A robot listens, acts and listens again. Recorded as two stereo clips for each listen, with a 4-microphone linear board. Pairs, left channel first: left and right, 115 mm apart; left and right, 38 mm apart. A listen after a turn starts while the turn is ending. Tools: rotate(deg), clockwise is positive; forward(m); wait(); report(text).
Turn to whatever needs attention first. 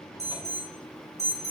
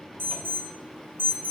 rotate(70)
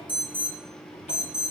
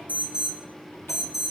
rotate(10)
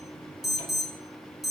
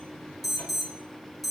report("Facing the alarm.")